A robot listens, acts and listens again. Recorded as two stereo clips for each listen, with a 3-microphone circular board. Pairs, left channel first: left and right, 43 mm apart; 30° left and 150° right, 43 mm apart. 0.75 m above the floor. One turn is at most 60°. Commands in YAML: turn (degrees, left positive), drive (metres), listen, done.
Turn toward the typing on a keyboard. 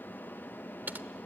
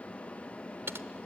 turn: -60
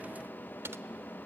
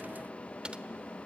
turn: -60
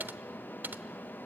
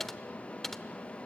turn: -55
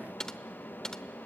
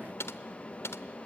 turn: 15
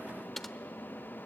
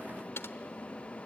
done: "Facing the typing on a keyboard, under 1 m away."